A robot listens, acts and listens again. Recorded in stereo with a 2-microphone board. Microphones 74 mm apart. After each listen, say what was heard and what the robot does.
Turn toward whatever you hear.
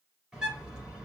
Turn 30° right.
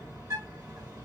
So it is at 135° right. Turn 135° right.
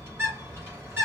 The bird is now 30° right. Turn 30° right.
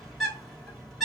Facing the bird, 2 to 4 m away.